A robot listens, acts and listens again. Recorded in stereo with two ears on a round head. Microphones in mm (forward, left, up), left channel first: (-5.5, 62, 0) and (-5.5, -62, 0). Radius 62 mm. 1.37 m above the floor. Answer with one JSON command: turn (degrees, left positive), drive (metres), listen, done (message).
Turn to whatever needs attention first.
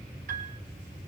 {"listen": true}
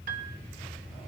{"listen": true}
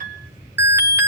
{"turn": -20}
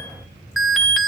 {"done": "Found it: an alarm, straight ahead, 1 to 2 m away."}